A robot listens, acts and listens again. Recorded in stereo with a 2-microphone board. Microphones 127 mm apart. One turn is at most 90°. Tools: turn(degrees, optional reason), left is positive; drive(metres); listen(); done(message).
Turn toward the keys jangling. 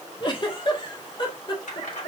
turn(degrees=70, reason="The keys jangling: about 70° left or 110° left.")
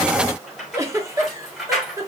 done("Found it: keys jangling, straight ahead.")